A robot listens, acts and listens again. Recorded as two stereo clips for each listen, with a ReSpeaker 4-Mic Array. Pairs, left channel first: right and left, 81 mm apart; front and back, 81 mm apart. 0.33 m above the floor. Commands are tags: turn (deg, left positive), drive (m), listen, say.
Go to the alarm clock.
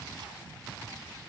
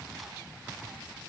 <listen/>
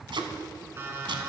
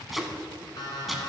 <turn deg="30"/>
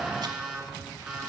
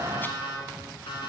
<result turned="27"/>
<drive m="1.0"/>
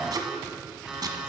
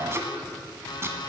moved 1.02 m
<drive m="1.0"/>
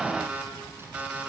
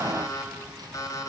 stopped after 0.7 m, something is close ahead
<turn deg="20"/>
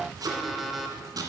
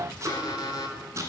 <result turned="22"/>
<say>Arrived at the alarm clock, straight ahead.</say>